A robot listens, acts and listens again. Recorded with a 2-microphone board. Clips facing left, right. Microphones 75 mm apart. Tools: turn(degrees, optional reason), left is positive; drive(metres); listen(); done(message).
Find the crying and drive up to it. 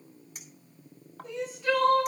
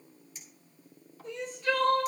turn(degrees=30)
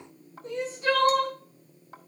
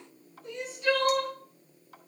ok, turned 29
turn(degrees=145, reason="So it is at 145° left.")
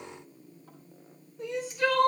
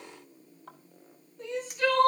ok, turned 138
turn(degrees=10, reason="The crying is now 10° left.")
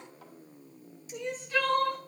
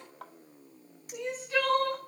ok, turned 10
drive(metres=1.0)
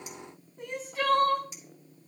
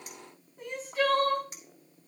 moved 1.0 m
drive(metres=1.0)
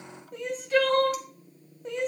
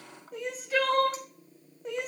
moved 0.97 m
drive(metres=1.0)
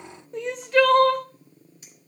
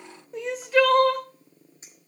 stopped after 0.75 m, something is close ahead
done("I am next to the crying.")